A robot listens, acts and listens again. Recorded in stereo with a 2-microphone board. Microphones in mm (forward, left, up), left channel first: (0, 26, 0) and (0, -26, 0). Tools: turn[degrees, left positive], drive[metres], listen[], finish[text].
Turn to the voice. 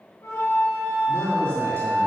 Thought: The man speaking: about 55° right or 125° right.
Action: turn[-55]
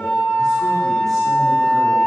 Action: listen[]
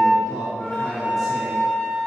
Action: finish[Found it: a man speaking, straight ahead.]